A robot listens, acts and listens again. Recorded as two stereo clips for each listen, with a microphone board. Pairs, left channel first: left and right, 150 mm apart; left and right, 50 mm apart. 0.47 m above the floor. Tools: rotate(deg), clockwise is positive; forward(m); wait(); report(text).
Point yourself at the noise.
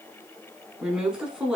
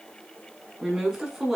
rotate(30)
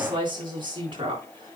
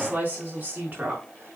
rotate(145)
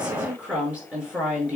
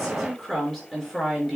rotate(10)
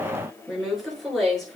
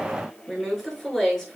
report("Found it: a woman speaking, straight ahead, over 4 m away.")